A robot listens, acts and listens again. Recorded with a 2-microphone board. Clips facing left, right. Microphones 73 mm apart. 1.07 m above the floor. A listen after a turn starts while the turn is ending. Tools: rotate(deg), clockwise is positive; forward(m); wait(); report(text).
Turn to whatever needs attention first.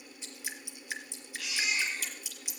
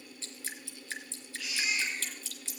rotate(-90)
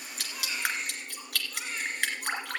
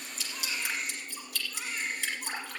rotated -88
report("Found it: a baby crying, straight ahead.")